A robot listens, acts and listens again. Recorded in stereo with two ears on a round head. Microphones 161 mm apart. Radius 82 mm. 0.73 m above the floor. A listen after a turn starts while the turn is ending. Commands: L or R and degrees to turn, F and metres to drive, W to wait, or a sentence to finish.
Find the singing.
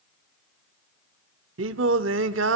R90
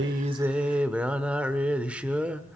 Facing the singing.